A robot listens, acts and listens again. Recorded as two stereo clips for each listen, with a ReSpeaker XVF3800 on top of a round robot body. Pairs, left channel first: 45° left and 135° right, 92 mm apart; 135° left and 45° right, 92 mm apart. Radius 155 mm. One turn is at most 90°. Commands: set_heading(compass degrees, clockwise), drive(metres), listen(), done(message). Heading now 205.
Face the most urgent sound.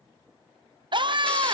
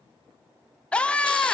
set_heading(295)
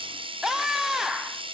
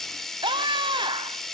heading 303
set_heading(353)
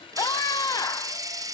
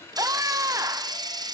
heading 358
done("Facing the scream, 1 to 2 m away.")